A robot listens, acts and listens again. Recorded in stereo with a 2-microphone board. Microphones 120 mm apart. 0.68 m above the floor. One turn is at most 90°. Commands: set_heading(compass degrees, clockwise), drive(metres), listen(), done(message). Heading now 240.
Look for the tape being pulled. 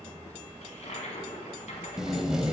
set_heading(270)
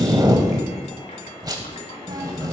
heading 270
set_heading(0)
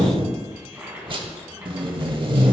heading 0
set_heading(50)
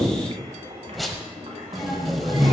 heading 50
done("Found it: tape being pulled, straight ahead, under 1 m away.")